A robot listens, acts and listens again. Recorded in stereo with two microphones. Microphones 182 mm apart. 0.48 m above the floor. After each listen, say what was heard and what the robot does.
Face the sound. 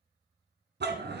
The dog barking: about 70° right or 110° right. Turn 70° right.
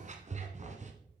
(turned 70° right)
So it is at 40° right. Turn 40° right.
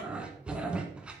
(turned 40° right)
Found it: a dog barking, straight ahead.